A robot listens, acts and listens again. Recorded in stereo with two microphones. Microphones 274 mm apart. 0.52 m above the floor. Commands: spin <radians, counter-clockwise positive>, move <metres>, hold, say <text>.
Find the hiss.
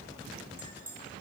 hold
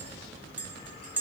hold
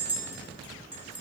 say I can't make out a hiss, only a clink.